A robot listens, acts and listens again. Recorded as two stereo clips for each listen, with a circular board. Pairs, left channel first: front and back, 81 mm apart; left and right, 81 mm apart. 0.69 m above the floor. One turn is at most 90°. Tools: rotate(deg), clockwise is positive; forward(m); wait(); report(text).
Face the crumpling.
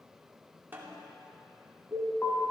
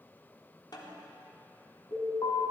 wait()
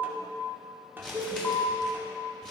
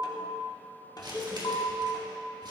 rotate(80)
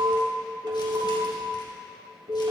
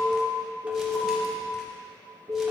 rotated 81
wait()
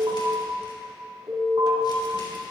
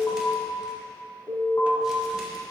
wait()
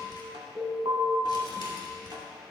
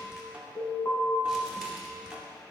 report("Found it: crumpling, straight ahead, 2 to 4 m away.")